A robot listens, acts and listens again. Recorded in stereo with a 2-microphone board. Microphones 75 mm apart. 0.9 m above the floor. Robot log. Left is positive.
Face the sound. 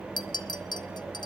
note: The clink: about 65° left or 115° left.
cmd yaw +65
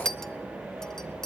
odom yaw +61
end: Facing the clink, under 1 m away.